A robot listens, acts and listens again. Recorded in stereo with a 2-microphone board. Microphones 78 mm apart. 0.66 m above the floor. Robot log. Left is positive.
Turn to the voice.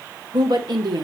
note: The woman speaking: about 65° right or 115° right.
cmd yaw -65
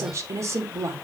note: So it is at 40° right.
cmd yaw -40
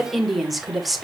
end: Found it: a woman speaking, straight ahead, 2 to 4 m away.